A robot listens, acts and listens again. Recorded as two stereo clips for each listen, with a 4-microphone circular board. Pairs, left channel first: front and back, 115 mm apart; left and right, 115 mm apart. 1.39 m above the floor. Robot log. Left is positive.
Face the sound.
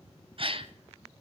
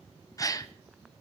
note: The gasp: 150° left.
cmd yaw +150
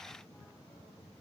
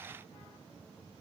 end: I heard a gasp from this way, but can't make it out now.